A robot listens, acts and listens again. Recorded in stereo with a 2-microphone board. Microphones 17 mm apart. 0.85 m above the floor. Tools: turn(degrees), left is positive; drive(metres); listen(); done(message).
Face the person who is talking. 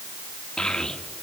turn(degrees=55)
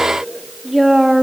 done("Found it: a child speaking, straight ahead.")